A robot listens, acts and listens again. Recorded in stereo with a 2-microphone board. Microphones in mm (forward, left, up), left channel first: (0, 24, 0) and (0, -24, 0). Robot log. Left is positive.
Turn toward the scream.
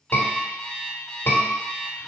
note: The scream: about 60° left or 120° left.
cmd yaw +60
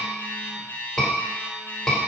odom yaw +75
note: So it is at 10° left.
cmd yaw +10
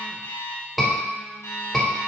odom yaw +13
end: Found it: a scream, straight ahead, 2 to 4 m away.